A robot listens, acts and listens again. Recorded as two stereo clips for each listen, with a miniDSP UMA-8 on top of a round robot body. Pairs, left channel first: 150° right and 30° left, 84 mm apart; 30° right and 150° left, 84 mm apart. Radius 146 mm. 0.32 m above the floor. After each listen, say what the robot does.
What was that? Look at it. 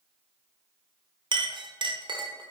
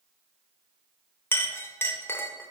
Turn 30° left.
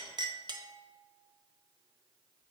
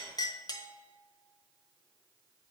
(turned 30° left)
Facing the clink, under 1 m away.